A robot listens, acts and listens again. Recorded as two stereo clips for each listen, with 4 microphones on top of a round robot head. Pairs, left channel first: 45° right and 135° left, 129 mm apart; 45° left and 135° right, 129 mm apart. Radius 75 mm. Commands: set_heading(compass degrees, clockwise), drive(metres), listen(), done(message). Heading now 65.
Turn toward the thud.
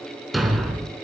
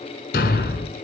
set_heading(15)
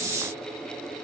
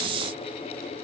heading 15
done("I heard a thud from this way, but can't make it out now.")